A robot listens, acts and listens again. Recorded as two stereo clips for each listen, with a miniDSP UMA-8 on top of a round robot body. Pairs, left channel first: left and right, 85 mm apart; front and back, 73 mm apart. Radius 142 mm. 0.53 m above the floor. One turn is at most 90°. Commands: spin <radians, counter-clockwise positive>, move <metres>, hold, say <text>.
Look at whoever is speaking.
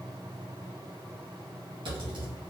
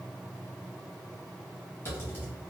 hold
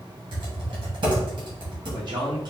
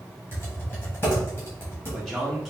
spin -1.57
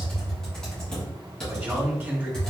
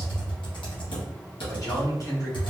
spin -0.35
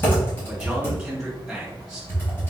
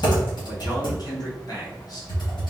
say Found it: a man speaking, straight ahead, 1 to 2 m away.